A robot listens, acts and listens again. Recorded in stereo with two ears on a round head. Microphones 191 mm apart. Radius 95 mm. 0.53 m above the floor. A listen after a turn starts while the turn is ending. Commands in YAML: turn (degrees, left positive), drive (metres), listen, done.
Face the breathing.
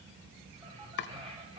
turn: -25
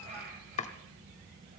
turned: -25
turn: -130
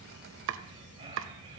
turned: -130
turn: -30
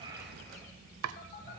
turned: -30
listen: true
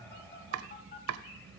listen: true
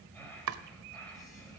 turn: 10
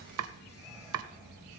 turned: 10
listen: true
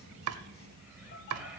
listen: true
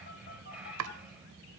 done: "Facing the breathing."